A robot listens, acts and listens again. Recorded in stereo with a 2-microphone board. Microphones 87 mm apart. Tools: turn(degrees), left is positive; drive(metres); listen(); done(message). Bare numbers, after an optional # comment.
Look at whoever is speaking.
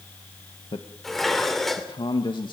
# The man speaking: about 65° left or 115° left.
turn(65)
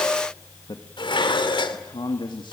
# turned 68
# So it is at 65° left.
turn(65)
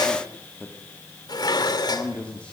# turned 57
# The man speaking is now 15° left.
turn(15)
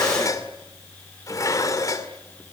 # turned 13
listen()
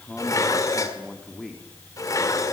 done("Facing the man speaking, 2 to 4 m away.")